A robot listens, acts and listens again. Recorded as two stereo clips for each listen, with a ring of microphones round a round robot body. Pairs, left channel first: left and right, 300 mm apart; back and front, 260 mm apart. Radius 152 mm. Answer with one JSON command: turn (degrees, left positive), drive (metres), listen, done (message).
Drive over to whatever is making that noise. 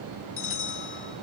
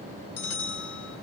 {"turn": 140}
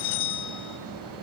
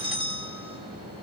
{"turn": 70}
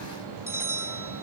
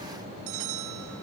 {"drive": 1.0}
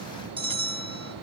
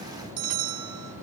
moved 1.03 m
{"turn": -15}
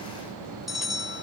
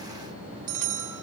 {"drive": 1.0}
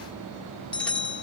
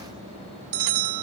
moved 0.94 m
{"drive": 1.0}
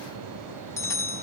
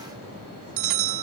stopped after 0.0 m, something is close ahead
{"turn": 10}
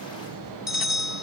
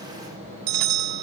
{"done": "Arrived at the bell, straight ahead."}